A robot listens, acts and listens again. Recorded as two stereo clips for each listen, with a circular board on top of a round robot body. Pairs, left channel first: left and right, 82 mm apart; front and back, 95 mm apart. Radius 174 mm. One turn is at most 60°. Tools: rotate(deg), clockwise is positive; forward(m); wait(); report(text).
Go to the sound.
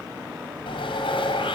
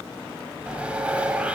rotate(-60)
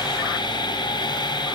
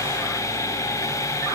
rotate(-60)
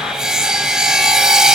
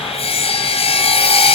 rotate(10)
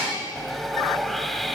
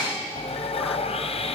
forward(1.0)
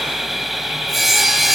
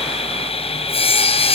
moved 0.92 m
forward(1.0)
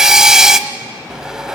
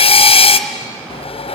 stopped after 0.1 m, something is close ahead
rotate(10)
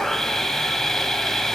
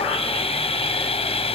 report("I am next to the sawing.")